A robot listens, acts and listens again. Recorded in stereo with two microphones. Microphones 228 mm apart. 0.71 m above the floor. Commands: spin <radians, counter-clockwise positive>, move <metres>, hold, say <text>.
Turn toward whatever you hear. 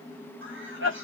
spin -0.96
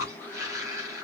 spin -0.26
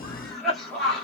say Found it: a cough, straight ahead, 1 to 2 m away.